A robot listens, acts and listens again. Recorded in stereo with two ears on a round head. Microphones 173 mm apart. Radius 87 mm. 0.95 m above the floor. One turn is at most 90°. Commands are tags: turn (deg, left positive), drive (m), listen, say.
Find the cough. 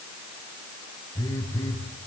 <listen/>
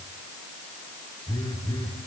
<listen/>
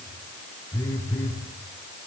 <say>I can't make out a cough, only a phone buzzing.</say>